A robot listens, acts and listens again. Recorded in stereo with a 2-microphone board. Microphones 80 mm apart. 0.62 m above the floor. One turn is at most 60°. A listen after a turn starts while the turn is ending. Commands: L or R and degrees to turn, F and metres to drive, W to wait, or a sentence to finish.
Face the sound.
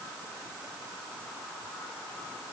W
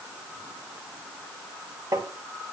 R50
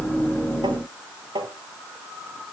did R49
R60
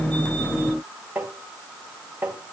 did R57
R25
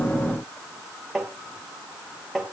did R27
Found it: tapping, straight ahead.